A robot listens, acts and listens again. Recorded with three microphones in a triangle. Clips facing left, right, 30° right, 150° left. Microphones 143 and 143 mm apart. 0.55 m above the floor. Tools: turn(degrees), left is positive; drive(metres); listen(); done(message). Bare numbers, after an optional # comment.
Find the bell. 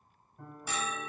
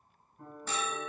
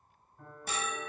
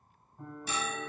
# The bell: 10° left.
turn(10)
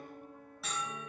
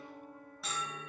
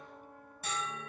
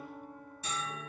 done("Facing the bell, 1 to 2 m away.")